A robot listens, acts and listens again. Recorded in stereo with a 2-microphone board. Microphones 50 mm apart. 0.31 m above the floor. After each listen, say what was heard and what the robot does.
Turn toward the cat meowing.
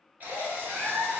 The cat meowing: about 45° right or 135° right. Turn 45° right.
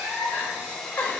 So it is at 75° right. Turn 75° right.
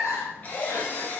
The cat meowing is now 30° right. Turn 30° right.
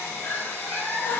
The cat meowing is now 10° left. Turn 10° left.
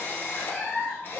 Found it: a cat meowing, straight ahead, 2 to 4 m away.